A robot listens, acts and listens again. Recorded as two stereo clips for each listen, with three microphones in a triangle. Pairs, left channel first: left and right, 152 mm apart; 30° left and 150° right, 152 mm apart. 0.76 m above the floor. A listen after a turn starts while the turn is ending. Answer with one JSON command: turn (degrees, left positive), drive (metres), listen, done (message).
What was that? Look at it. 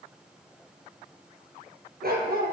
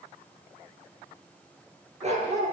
{"turn": -105}
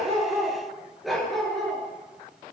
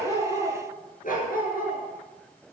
{"done": "Facing the dog barking."}